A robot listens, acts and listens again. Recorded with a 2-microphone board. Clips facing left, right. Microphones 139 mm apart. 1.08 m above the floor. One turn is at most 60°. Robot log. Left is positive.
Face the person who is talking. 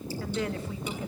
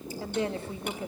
note: The woman speaking: about 30° right or 150° right.
cmd yaw -30
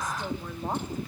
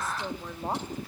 note: So it is at 10° right.
cmd yaw -10
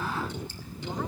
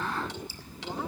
cmd idle
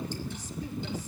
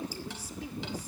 cmd idle
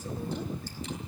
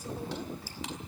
end: Facing where the woman speaking came from. I can't hear it now.